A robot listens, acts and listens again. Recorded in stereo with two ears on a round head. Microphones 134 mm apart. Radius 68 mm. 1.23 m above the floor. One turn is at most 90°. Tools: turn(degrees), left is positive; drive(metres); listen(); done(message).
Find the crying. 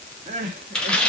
turn(degrees=-45)
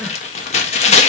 listen()
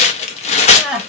done("Found it: crying, straight ahead, 1 to 2 m away.")